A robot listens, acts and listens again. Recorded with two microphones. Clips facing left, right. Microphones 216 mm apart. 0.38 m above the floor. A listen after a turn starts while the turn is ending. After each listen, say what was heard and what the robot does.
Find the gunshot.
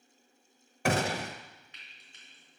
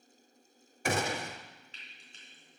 The gunshot: about 65° left or 115° left. Turn 65° left.
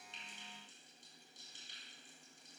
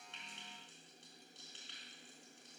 Keep listening.
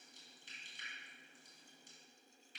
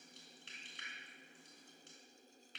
I heard a gunshot, but can't make it out now. It was about straight ahead or 50° left.